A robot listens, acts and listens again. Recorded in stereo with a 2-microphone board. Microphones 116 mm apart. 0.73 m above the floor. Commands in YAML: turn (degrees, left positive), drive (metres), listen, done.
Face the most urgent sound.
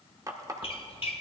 listen: true
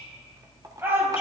turn: -20
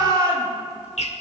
turn: -140
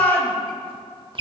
turn: 15
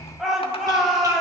done: "Facing the shout, 2 to 4 m away."